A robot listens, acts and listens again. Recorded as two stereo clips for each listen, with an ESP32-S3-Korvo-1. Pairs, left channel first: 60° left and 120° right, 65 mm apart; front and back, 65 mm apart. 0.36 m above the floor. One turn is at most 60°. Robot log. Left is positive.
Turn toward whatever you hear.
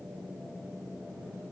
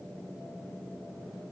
cmd idle
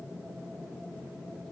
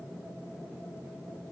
cmd idle
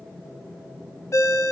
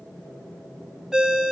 note: The ringtone: 100° left.
cmd yaw +60
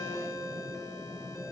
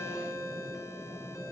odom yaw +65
note: The ringtone is now 35° left.
cmd yaw +35
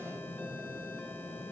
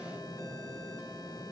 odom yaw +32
cmd idle
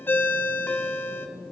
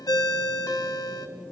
end: Facing the ringtone.